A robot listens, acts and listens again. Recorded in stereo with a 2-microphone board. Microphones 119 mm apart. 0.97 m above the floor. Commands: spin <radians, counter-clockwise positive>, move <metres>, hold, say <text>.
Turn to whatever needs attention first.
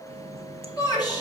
spin 0.61
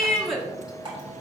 say Facing the shout.